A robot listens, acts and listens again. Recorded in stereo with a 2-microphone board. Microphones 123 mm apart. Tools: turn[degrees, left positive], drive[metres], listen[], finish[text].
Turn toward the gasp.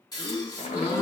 Thought: The gasp: about 30° left or 150° left.
Action: turn[30]
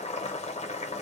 Action: listen[]
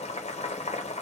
Action: finish[I heard a gasp, but can't make it out now. It was about straight ahead or 120° left.]